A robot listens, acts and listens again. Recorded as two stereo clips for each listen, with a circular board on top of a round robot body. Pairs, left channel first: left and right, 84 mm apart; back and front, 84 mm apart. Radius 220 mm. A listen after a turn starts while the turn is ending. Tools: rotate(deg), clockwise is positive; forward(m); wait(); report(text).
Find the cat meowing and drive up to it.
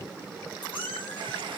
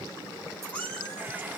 rotate(-105)
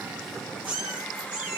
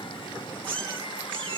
rotate(15)
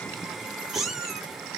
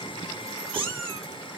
forward(1.0)
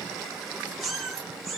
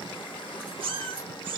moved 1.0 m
forward(1.0)
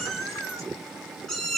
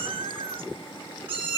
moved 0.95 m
forward(1.0)
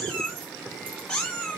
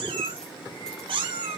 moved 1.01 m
rotate(-15)
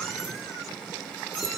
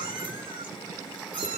wait()
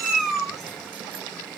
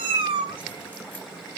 forward(1.0)
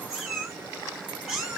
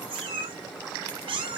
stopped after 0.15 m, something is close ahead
report("I am next to the cat meowing.")